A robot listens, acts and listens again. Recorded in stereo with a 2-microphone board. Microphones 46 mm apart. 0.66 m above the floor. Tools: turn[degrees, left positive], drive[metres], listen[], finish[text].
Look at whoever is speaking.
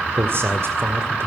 Thought: The man speaking: about 60° right or 120° right.
Action: turn[-60]
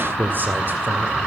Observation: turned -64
Thought: So it is at 50° right.
Action: turn[-50]
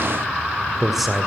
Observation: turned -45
Action: finish[Found it: a man speaking, straight ahead, 2 to 4 m away.]